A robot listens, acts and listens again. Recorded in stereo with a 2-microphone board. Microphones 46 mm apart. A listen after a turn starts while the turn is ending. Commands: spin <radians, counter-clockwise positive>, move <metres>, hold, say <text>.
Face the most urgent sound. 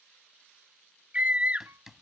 spin -0.44
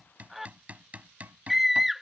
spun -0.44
say Facing the scream.